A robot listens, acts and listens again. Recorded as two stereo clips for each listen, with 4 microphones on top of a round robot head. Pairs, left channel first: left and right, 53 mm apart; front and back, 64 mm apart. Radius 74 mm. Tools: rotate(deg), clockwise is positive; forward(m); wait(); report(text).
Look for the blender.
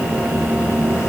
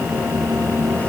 wait()
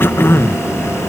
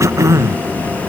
wait()
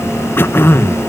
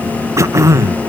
report("I can't make out a blender, only throat clearing.")